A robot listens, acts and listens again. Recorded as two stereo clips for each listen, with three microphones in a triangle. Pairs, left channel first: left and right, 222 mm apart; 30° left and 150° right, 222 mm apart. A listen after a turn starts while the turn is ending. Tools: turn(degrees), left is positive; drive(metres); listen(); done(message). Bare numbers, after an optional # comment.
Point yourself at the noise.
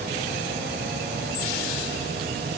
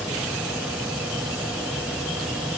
listen()
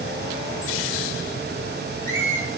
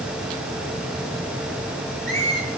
# The squeak: 150° left.
turn(150)
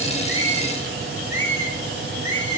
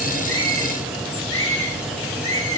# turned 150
# The squeak is now 10° left.
turn(10)
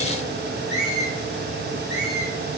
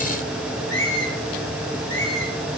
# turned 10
done("Found it: a squeak, straight ahead, over 4 m away.")